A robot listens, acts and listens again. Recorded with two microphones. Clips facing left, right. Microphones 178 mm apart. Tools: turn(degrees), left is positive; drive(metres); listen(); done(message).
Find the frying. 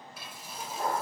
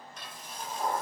turn(degrees=30)
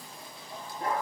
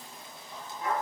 listen()
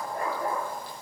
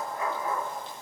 listen()
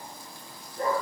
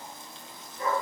done("I heard frying, but can't make it out now. It was about 20° right or 140° left.")